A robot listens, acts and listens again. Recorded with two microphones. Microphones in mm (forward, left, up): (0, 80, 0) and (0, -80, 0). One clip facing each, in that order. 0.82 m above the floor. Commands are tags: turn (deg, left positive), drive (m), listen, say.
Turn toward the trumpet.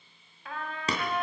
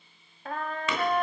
<turn deg="-50"/>
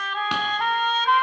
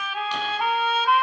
<turn deg="-10"/>
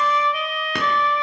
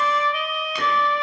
<say>Found it: a trumpet, straight ahead, 1 to 2 m away.</say>